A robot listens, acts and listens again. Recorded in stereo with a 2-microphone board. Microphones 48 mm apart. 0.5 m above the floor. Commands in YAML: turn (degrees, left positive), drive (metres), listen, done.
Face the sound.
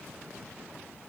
listen: true
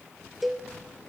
turn: 30
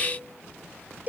turn: -35
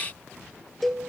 done: "Found it: a cowbell, straight ahead, 2 to 4 m away."